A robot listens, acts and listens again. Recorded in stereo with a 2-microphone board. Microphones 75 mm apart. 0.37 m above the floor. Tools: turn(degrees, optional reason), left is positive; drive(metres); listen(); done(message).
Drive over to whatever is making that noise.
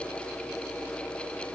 listen()
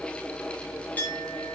turn(degrees=20, reason="The clink: about 20° left or 160° left.")
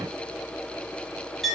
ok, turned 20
drive(metres=1.0)
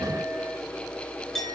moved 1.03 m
drive(metres=1.0)
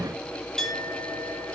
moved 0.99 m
drive(metres=1.0)
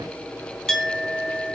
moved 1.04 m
turn(degrees=10, reason="The clink is now 10° left.")
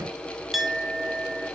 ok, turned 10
drive(metres=1.0)
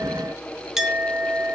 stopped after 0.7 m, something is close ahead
turn(degrees=-10, reason="The clink is now 10° right.")
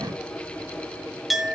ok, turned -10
done("I am next to the clink.")